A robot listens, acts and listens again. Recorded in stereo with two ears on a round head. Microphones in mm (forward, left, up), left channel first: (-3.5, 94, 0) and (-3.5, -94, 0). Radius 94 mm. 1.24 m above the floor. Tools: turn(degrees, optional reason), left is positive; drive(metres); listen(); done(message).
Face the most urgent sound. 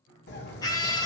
turn(degrees=20, reason="The scream: about 20° left or 160° left.")
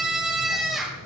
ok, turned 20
done("Facing the scream, 1 to 2 m away.")